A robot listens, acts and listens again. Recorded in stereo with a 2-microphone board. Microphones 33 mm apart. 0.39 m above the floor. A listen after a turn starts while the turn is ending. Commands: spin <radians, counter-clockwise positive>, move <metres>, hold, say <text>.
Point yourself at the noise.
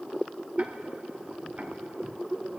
hold
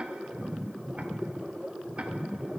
spin -0.70
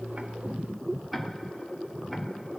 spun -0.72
say Found it: ticking, straight ahead, 1 to 2 m away.